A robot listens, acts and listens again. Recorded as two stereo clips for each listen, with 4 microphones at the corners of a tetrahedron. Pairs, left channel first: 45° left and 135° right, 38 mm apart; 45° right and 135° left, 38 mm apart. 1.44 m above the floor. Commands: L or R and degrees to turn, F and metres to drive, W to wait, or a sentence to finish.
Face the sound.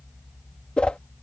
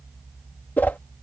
R15
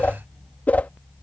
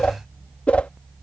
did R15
Facing the whoosh.